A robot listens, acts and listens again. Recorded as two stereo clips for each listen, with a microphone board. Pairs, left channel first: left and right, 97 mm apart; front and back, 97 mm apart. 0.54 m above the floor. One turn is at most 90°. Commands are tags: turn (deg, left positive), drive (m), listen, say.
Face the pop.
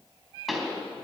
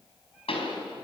<say>Facing the pop.</say>